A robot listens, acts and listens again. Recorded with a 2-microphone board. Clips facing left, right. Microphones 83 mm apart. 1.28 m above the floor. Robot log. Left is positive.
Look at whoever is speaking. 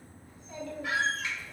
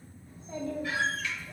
note: The child speaking: about 25° right or 155° right.
cmd yaw -25
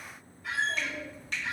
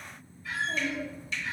note: The child speaking: about 30° right or 150° right.
cmd yaw -30
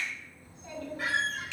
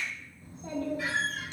note: The child speaking: about 30° right or 150° right.
cmd yaw -30
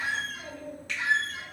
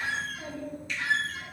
note: The child speaking: about 35° right or 145° right.
cmd yaw -35
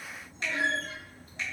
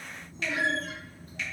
note: So it is at 120° right.
cmd yaw -120
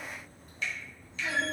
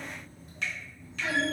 end: Found it: a child speaking, straight ahead, 1 to 2 m away.